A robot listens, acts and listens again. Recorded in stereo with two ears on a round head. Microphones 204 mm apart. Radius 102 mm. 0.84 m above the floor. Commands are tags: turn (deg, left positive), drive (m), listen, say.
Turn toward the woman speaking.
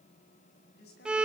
<turn deg="50"/>
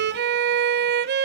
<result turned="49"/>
<listen/>
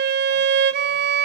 <listen/>
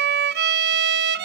<say>I heard a woman speaking, but can't make it out now. It was about straight ahead or 80° left.</say>